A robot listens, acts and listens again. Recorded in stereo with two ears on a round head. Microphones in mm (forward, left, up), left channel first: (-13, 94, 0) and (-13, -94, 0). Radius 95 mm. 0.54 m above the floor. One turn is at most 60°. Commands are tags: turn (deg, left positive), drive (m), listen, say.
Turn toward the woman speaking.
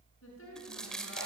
<turn deg="60"/>
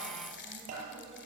<listen/>
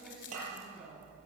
<say>Facing the woman speaking.</say>